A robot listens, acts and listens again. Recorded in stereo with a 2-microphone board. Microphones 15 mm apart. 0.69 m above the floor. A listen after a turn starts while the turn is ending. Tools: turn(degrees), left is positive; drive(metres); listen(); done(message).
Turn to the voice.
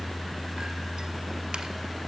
listen()
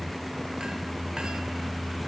listen()
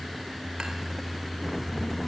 turn(degrees=40)
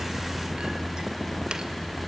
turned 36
done("Facing the child speaking.")